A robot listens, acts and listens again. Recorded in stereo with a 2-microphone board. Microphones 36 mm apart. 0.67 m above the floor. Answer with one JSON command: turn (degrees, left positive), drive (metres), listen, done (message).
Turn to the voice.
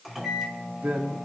{"turn": -60}
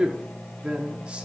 {"turn": -40}
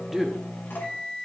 {"done": "Facing the man speaking."}